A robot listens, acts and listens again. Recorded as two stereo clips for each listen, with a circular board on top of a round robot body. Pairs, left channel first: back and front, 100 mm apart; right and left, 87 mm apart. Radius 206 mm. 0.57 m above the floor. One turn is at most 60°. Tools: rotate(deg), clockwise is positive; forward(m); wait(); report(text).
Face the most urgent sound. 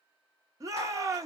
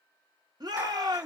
rotate(-55)
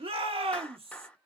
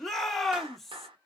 report("Facing the shout, 1 to 2 m away.")